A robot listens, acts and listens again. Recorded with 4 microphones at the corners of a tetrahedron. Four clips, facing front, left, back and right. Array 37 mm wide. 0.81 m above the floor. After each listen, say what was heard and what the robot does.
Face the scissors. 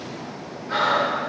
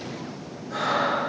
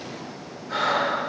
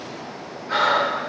Keep listening.
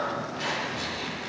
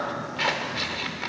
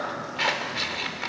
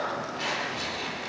The scissors: 140° left. Turn 140° left.
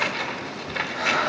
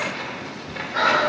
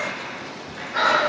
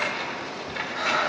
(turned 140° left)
Facing the scissors.